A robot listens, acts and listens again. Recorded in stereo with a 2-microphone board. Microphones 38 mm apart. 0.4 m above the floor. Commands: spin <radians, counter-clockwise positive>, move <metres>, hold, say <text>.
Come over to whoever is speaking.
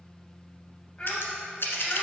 spin 0.44
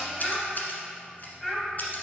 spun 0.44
move 1.0
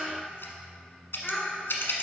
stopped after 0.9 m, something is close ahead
spin 0.35
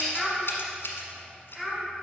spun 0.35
say Arrived at the child speaking, straight ahead.